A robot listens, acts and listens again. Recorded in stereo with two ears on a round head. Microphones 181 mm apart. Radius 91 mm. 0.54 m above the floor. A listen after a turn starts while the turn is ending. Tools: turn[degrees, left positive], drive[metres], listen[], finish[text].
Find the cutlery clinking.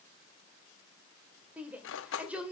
Thought: The cutlery clinking: about 65° left or 115° left.
Action: turn[65]
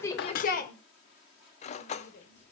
Thought: So it is at 35° left.
Action: turn[35]
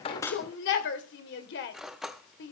Action: finish[Found it: cutlery clinking, straight ahead, under 1 m away.]